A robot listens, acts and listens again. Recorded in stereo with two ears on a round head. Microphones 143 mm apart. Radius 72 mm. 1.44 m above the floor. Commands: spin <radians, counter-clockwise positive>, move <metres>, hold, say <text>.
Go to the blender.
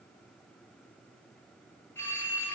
hold
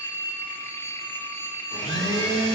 spin 0.52
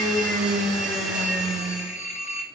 move 1.0
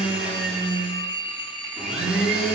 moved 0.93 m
move 1.0
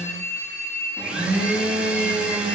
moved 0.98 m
move 1.0
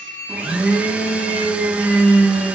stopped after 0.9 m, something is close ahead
spin -0.17
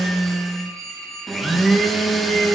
say I am next to the blender.